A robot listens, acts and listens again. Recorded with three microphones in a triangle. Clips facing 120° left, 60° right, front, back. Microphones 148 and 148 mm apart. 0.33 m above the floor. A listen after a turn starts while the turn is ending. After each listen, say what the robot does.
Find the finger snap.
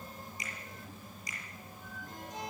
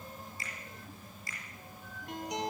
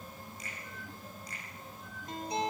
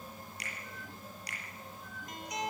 Turn 170° right.
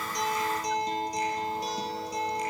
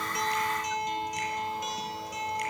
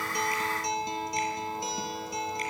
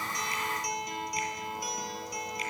Keep listening.
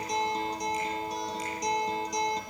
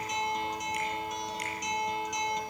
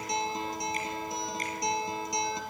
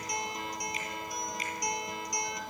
Keep listening.
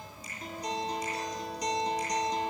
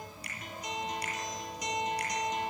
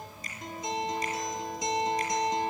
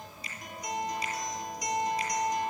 Turn 45° right.
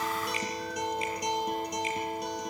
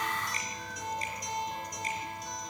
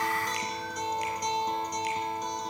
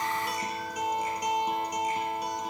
Keep listening.
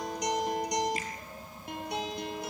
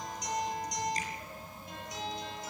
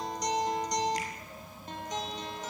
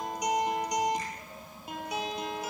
Keep listening.
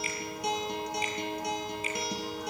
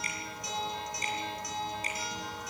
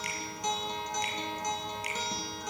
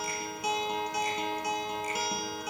Facing where the finger snap came from. I can't hear it now.